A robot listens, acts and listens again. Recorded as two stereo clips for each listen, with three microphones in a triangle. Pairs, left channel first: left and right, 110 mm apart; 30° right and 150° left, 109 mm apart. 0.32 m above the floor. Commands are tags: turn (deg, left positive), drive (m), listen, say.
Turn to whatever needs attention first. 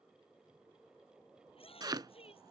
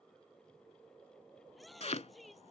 <turn deg="60"/>
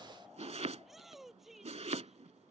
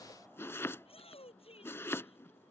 <say>Found it: a shout, straight ahead.</say>